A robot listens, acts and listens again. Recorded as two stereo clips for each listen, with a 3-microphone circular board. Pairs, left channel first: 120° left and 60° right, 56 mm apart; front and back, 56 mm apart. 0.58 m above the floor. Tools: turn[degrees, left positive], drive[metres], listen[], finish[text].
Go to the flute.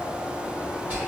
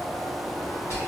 Action: listen[]
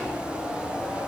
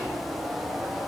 Action: listen[]
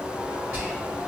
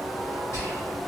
Action: finish[I can't make out a flute to turn to.]